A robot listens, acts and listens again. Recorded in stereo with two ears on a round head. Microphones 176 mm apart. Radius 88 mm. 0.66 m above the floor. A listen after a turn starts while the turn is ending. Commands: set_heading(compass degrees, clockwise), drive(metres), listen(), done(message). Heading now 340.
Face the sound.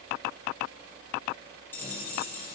set_heading(310)
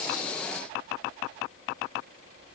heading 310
listen()
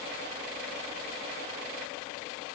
done("I heard a dropped coin, but can't make it out now. It was about 20° right or 140° left.")